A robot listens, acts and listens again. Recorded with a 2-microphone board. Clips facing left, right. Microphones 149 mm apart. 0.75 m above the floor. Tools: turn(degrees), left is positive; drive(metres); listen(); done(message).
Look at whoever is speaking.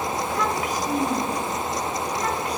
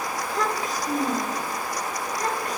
turn(degrees=-40)
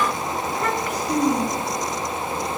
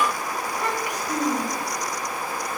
turn(degrees=-15)
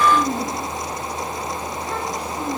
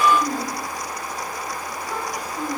turn(degrees=-10)
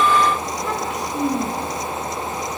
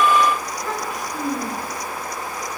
done("Facing the child speaking, over 4 m away.")